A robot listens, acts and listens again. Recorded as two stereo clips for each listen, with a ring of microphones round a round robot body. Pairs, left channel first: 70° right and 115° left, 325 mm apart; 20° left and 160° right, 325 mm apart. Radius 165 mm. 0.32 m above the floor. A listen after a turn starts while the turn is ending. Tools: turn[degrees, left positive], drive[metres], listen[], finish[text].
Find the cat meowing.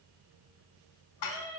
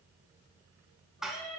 Thought: The cat meowing: 30° right.
Action: turn[-30]
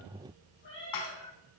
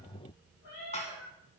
Thought: The cat meowing is now 10° right.
Action: turn[-10]
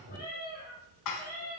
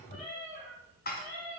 Action: finish[Facing the cat meowing.]